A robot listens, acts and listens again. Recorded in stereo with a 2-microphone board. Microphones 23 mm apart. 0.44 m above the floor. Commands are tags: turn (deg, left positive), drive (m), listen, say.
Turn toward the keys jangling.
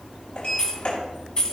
<turn deg="35"/>
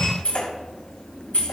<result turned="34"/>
<turn deg="100"/>
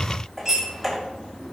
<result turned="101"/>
<listen/>
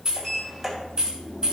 <turn deg="-35"/>
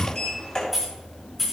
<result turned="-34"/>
<say>Facing the keys jangling, 2 to 4 m away.</say>